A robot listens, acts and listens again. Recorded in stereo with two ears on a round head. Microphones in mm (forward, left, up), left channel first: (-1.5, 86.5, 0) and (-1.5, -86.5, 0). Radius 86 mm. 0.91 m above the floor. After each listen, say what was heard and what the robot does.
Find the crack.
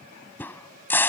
Turn 30° left.
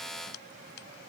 Keep listening.
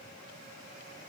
I heard a crack, but can't make it out now. It was about 20° right or 140° left.